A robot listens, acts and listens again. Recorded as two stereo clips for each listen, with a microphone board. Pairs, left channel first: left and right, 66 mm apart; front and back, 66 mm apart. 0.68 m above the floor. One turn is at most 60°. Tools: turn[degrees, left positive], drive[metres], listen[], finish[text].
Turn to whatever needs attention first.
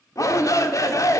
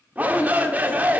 Thought: The shout: 115° left.
Action: turn[60]
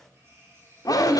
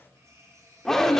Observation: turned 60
Thought: The shout is now 85° left.
Action: turn[60]
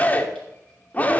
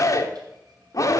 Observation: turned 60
Thought: The shout is now 30° left.
Action: turn[30]
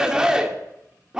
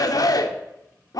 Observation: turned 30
Thought: The shout is now 10° right.
Action: turn[-10]
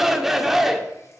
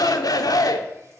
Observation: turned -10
Action: finish[Facing the shout.]